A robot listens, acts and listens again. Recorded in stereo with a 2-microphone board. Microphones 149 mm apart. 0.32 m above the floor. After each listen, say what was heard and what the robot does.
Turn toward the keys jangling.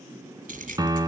The keys jangling: about 70° right or 110° right. Turn 70° right.
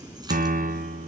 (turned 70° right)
So it is at 25° right. Turn 25° right.
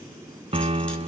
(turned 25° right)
Keep listening.
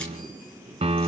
Keep listening.
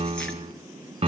I heard keys jangling from this way, but can't make it out now.